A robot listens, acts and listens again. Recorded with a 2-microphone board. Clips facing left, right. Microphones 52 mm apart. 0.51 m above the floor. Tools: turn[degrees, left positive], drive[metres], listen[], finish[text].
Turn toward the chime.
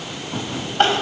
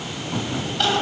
Action: listen[]
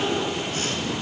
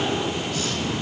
Action: listen[]
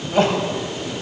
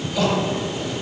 Action: finish[I can't make out a chime to turn to.]